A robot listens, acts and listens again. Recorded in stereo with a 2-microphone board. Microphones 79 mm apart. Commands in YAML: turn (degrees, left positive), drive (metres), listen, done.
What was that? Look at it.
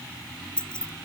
turn: 30
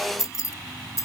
turn: 140
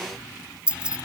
turn: -15
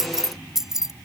done: "Found it: keys jangling, straight ahead."